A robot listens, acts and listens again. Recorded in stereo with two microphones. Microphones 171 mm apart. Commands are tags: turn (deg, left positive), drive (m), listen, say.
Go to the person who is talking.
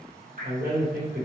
<turn deg="-60"/>
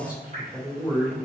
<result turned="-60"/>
<turn deg="-10"/>
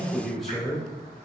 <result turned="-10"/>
<drive m="1.0"/>
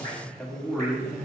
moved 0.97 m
<drive m="1.0"/>
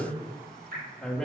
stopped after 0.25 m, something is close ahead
<say>I am next to the man speaking.</say>